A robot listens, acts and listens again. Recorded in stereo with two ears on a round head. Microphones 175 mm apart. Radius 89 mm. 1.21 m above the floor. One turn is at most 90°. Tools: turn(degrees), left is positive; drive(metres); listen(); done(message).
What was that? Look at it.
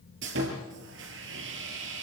turn(degrees=-70)
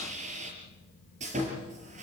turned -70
turn(degrees=-35)
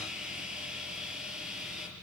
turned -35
done("Found it: sawing, straight ahead.")